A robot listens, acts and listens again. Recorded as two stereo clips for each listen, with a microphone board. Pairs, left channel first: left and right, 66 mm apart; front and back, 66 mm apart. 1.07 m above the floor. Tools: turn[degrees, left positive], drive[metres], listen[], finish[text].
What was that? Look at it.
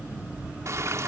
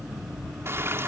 Thought: The frying: 130° right.
Action: turn[-130]
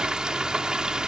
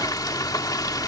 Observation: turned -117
Thought: The frying is now 10° right.
Action: turn[-10]
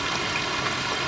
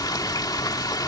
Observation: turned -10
Action: finish[Found it: frying, straight ahead.]